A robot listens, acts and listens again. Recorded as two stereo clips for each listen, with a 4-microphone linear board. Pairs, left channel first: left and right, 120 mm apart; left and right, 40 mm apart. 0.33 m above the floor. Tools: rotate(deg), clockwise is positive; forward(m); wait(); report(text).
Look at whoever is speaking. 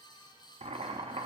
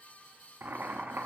wait()
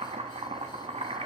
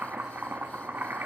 wait()
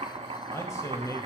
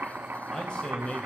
rotate(-25)
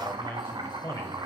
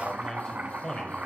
rotate(-25)
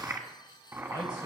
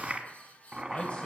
rotate(-35)
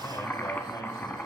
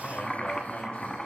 wait()
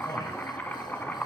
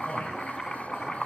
wait()
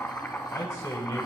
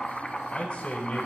rotate(-30)
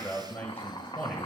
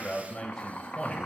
rotate(-15)
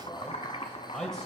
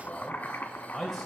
report("Found it: a man speaking, straight ahead.")